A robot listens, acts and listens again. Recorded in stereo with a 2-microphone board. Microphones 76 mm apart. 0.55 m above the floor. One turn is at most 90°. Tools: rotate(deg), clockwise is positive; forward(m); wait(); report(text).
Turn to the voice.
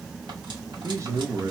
rotate(40)
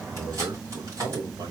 rotate(90)
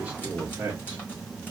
rotate(20)
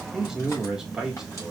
report("Found it: a man speaking, straight ahead, 1 to 2 m away.")